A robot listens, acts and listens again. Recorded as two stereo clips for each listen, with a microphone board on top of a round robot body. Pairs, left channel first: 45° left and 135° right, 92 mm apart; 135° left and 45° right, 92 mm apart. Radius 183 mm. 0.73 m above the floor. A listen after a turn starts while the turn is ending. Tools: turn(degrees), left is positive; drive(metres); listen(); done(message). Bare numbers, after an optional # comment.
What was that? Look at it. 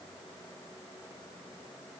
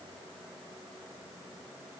listen()
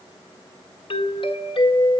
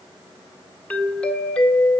# The doorbell: 60° left.
turn(60)
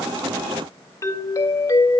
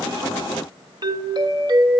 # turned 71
# The doorbell is now 10° right.
turn(-10)
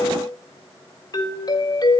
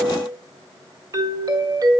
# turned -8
done("Found it: a doorbell, straight ahead.")